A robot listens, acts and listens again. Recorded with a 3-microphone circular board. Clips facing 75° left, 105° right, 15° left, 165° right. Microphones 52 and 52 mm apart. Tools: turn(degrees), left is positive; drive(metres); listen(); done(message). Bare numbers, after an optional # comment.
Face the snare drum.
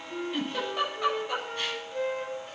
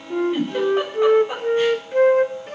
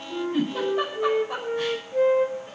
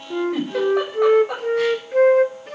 listen()
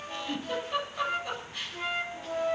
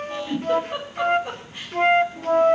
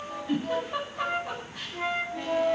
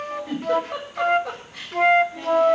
listen()
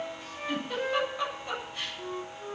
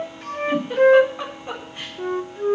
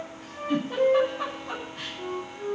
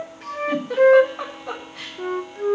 done("I can't make out a snare drum to turn to.")